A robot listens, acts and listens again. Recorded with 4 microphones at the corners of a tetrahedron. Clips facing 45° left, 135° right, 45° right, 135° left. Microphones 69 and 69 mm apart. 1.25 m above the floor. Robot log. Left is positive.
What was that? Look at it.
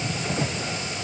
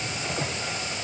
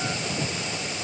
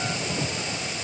cmd idle
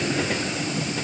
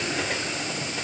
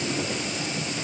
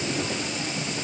cmd idle
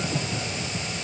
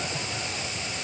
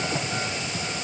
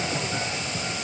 end: I can't make out anything.